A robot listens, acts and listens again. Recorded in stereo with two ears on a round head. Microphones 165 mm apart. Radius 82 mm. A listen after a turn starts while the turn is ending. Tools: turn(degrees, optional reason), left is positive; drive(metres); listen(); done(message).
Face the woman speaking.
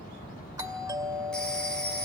listen()
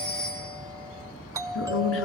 turn(degrees=70, reason="The woman speaking: about 70° left or 110° left.")
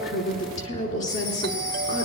turn(degrees=40, reason="So it is at 40° left.")
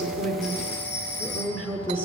done("Found it: a woman speaking, straight ahead, over 4 m away.")